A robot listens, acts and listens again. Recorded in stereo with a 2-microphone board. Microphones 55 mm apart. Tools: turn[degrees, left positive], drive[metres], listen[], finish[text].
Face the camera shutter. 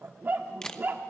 Action: turn[30]
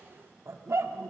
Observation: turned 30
Action: listen[]
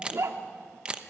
Thought: So it is at 20° right.
Action: turn[-20]
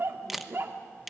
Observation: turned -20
Action: finish[Found it: a camera shutter, straight ahead.]